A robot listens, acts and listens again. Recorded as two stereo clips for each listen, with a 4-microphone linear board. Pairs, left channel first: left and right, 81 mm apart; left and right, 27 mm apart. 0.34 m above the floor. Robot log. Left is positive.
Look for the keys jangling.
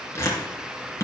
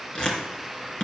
cmd idle
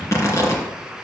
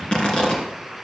cmd idle
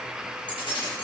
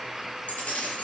note: The keys jangling: about 70° left or 110° left.
cmd yaw +70
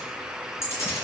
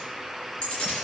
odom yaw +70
note: So it is at 35° left.
cmd yaw +35
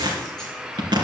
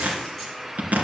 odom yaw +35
cmd idle
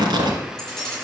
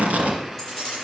note: The keys jangling is now 10° left.
cmd yaw +10
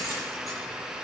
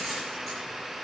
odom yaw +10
cmd idle
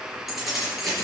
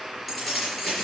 end: Found it: keys jangling, straight ahead.